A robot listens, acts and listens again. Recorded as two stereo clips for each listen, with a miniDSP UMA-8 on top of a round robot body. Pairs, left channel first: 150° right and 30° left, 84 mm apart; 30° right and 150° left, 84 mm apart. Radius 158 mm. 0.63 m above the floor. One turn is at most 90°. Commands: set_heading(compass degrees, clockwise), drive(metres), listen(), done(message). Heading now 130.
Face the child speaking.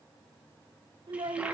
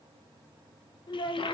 done("Found it: a child speaking, straight ahead.")